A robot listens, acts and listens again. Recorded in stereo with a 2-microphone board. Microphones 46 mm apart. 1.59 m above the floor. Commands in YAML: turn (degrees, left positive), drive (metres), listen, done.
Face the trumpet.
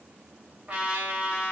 turn: -30
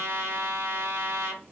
turn: -115
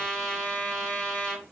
turn: 20
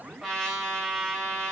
done: "Facing the trumpet."